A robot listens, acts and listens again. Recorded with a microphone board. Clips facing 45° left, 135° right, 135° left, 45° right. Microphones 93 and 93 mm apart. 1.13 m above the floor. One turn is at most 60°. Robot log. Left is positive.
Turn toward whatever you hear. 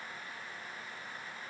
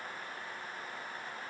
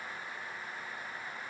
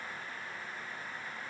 cmd idle
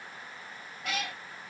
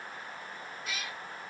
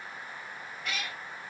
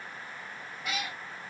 note: The cat meowing: 35° left.
cmd yaw +35
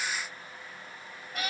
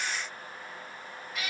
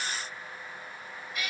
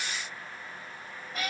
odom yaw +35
end: Facing the cat meowing.